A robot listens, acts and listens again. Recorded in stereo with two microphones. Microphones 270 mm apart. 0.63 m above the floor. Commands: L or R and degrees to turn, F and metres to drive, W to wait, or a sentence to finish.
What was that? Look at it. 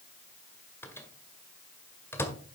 L30
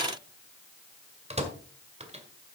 R25
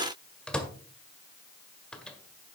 Found it: a microwave, straight ahead.